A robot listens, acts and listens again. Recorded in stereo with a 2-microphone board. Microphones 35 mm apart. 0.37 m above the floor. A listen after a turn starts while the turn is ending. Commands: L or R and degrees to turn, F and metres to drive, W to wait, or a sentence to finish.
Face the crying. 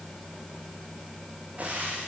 W
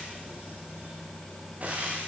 W
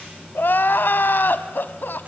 L90
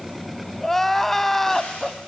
Facing the crying.